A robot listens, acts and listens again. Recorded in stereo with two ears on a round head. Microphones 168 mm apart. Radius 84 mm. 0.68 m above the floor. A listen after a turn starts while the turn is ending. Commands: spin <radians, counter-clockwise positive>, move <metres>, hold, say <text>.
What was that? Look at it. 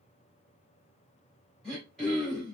spin 0.52
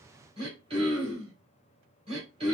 spin -0.52
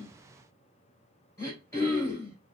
spin 0.26
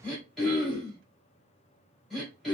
say Found it: throat clearing, straight ahead, 2 to 4 m away.